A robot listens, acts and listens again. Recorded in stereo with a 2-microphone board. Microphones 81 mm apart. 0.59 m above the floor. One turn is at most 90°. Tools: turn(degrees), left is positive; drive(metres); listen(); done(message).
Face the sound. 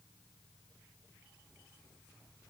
listen()
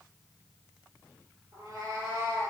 turn(degrees=-50)
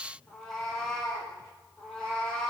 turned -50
turn(degrees=10)
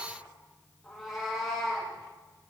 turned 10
done("Facing the cat meowing.")